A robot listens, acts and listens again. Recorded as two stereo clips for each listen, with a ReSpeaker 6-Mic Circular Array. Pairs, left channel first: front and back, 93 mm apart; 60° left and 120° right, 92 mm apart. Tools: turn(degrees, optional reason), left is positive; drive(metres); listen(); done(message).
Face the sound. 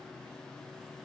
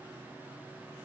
listen()
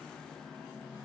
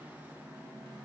listen()
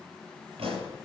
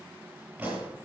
turn(degrees=165, reason="The pop: 165° left.")
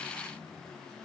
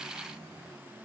done("I heard a pop from this way, but can't make it out now.")